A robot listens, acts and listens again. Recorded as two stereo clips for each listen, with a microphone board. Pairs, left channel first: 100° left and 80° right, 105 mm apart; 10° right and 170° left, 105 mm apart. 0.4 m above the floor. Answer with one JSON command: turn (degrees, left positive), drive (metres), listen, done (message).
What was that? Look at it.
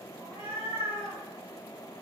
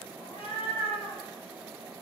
{"done": "Facing the cat meowing, 1 to 2 m away."}